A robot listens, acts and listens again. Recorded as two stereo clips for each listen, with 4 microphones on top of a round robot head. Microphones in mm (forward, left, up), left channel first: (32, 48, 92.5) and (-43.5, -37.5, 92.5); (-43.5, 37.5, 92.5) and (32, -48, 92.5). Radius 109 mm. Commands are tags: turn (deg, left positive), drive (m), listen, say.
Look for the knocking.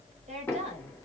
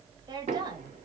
<turn deg="-25"/>
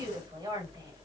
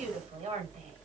<listen/>
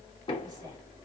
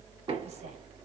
<say>Found it: knocking, straight ahead, 2 to 4 m away.</say>